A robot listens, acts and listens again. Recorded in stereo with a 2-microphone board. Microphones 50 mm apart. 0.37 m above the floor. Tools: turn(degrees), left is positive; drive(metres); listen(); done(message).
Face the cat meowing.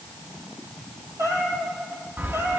turn(degrees=-55)
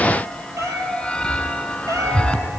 turn(degrees=-85)
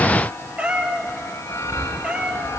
turn(degrees=-20)
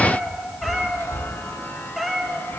done("Facing the cat meowing.")